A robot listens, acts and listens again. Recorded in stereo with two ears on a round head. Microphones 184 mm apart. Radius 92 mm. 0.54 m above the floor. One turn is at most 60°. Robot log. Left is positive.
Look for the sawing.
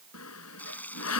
cmd yaw +60
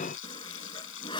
note: So it is at 25° left.
cmd yaw +25
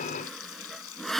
end: Facing the sawing.